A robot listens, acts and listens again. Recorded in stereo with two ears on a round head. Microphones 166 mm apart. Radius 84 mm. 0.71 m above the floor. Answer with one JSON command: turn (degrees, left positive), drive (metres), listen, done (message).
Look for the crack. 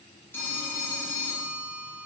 {"listen": true}
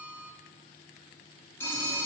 {"listen": true}
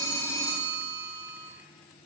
{"done": "I can't make out a crack to turn to."}